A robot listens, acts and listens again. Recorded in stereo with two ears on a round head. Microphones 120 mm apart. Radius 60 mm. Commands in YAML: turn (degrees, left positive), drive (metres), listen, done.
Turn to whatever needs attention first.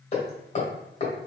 listen: true
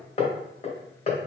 listen: true
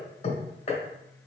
done: "I can't make out anything urgent, only hammering."